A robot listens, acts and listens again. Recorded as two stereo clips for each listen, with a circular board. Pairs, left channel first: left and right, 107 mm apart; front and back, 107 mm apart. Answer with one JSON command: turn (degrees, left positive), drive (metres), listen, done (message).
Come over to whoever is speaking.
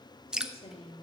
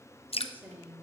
{"turn": 105}
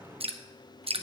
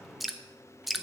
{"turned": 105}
{"listen": true}
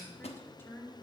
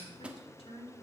{"turn": 25}
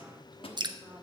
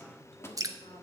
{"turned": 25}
{"turn": -15}
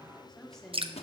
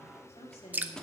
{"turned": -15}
{"drive": 1.0}
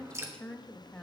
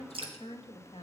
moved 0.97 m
{"turn": 10}
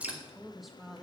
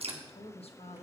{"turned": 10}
{"drive": 1.0}
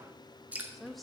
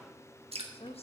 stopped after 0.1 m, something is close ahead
{"done": "Arrived at the woman speaking, straight ahead."}